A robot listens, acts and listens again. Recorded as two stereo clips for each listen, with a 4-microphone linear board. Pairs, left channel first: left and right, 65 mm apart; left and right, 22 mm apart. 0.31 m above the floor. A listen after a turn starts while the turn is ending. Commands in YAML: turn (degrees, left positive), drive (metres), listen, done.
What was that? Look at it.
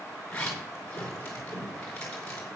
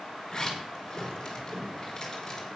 turn: 20
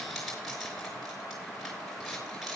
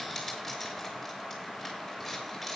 done: "Found it: a zipper, straight ahead, over 4 m away."